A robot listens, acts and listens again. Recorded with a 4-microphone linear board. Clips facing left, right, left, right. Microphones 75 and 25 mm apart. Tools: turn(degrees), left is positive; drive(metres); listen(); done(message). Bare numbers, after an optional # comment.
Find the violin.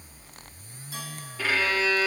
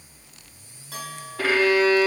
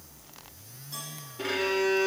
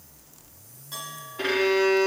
# The violin: about 60° right or 120° right.
turn(-60)
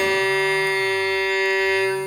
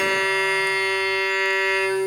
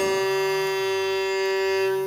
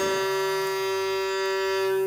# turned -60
done("Found it: a violin, straight ahead, 2 to 4 m away.")